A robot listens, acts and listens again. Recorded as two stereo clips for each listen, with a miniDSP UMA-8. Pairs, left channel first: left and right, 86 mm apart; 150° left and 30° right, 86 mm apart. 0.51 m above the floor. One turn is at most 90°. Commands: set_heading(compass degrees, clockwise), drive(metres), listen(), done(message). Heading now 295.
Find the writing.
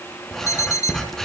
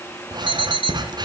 done("Found it: writing, straight ahead, 2 to 4 m away.")